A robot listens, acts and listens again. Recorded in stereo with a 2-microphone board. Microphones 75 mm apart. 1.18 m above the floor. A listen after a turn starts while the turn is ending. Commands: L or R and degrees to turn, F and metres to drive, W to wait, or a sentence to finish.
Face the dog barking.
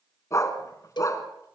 L45
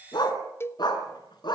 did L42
L105
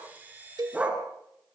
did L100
R20
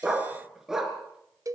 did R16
Facing the dog barking, over 4 m away.